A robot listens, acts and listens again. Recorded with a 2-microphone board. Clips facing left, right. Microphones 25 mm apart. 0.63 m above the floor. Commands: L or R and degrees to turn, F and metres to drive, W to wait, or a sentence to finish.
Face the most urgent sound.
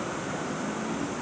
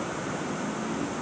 W
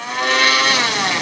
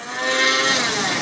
W
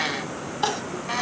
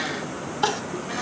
L30
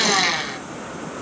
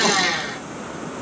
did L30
W
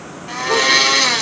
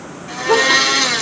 W
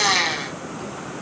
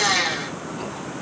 I heard crying, but can't make it out now. It was about 25° right or 145° left.